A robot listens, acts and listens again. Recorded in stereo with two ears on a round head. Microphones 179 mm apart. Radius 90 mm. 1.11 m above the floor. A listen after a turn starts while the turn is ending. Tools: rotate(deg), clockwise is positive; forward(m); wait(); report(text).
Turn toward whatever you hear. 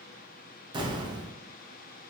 rotate(20)
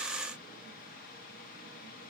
wait()
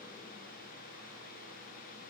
report("I heard an explosion, but can't make it out now. It was about straight ahead or 140° right.")